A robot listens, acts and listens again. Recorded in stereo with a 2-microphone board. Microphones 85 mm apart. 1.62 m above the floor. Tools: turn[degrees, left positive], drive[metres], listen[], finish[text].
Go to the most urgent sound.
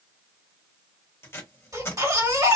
Thought: The baby crying: about 45° right or 135° right.
Action: turn[-45]
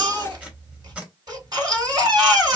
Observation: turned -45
Thought: So it is at 80° right.
Action: turn[-80]
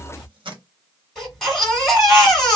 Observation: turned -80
Action: drive[1.0]
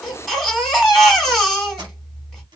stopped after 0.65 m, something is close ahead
Action: finish[I am next to the baby crying.]